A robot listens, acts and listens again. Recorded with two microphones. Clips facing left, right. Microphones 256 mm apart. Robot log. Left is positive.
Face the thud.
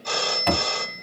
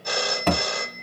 note: The thud: about 50° right or 130° right.
cmd yaw -50
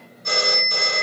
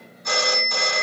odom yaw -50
cmd idle
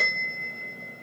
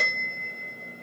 end: I heard a thud, but can't make it out now. It was about straight ahead or 80° right.